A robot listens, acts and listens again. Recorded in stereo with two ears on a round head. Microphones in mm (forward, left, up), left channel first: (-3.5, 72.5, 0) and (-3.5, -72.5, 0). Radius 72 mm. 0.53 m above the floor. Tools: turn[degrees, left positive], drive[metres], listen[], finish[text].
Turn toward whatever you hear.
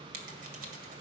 Thought: The scissors: about 55° right or 125° right.
Action: turn[-55]
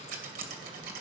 Thought: So it is at 60° right.
Action: turn[-60]
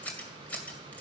Thought: The scissors is now 10° left.
Action: turn[10]
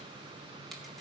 Action: listen[]
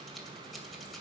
Action: finish[Facing the scissors, 2 to 4 m away.]